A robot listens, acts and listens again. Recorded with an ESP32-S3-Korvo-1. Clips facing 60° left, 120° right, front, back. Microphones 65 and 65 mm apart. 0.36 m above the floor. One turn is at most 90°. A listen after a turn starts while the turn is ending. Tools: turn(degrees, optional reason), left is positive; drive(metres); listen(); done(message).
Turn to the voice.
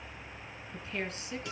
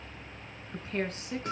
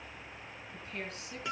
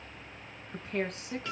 turn(degrees=-90, reason="The woman speaking: 170° right.")
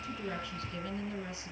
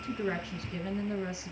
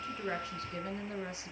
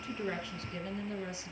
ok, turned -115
turn(degrees=-55, reason="The woman speaking is now 55° right.")
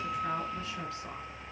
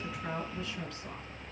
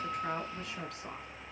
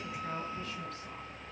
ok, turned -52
listen()
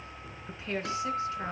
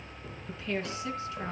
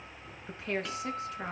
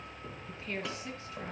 done("Found it: a woman speaking, straight ahead.")